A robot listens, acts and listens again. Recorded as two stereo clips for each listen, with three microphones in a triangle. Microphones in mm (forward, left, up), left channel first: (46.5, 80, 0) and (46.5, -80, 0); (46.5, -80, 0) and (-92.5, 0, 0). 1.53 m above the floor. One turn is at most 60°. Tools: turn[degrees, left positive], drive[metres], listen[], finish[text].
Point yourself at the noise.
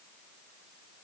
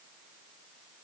Action: listen[]
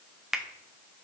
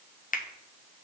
Action: finish[Found it: a finger snap, straight ahead, under 1 m away.]